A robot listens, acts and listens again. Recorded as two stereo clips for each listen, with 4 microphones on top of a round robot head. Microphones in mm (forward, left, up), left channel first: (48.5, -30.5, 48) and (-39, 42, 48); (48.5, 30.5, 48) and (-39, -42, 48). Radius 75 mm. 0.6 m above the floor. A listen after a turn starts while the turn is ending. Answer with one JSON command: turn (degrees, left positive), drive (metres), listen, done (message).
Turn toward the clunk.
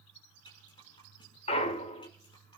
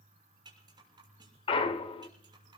{"done": "Facing the clunk."}